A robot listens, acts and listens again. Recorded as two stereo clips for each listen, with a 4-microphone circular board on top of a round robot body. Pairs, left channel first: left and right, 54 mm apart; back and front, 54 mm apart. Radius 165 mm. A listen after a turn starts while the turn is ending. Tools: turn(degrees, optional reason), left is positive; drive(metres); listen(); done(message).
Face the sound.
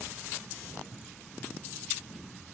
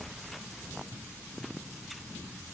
listen()
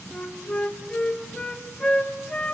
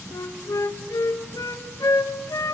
turn(degrees=170, reason="The flute: 170° left.")
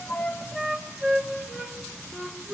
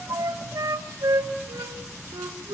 done("Facing the flute.")